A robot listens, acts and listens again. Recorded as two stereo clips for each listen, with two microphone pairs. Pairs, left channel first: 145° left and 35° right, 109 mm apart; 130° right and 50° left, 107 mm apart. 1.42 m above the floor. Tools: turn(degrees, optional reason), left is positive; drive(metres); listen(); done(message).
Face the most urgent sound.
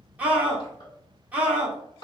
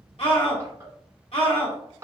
turn(degrees=-110, reason="The scream: 110° right.")
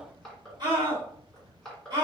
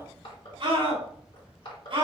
turn(degrees=15, reason="The scream is now 15° left.")
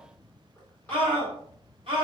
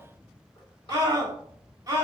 done("Facing the scream.")